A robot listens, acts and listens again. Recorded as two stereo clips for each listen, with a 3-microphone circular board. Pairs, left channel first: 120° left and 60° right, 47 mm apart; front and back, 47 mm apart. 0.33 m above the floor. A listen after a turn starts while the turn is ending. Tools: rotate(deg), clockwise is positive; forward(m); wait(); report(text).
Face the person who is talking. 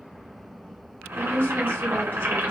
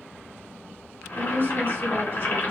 rotate(-145)
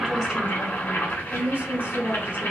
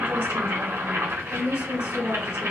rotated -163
rotate(20)
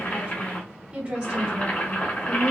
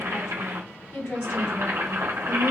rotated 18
report("Facing the woman speaking, 2 to 4 m away.")